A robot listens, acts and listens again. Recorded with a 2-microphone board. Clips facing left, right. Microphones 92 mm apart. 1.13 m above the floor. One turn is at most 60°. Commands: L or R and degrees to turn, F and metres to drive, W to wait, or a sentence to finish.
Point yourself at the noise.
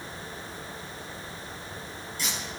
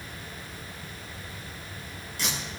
R60
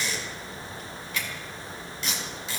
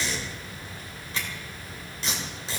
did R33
R35
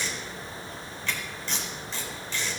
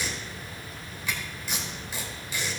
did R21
R10
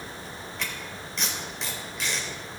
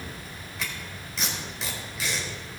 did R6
Facing the tape being pulled.